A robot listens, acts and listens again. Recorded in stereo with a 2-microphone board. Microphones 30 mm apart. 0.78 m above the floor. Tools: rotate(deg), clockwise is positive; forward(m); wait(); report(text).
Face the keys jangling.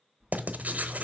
rotate(25)
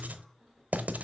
report("Facing the keys jangling, 2 to 4 m away.")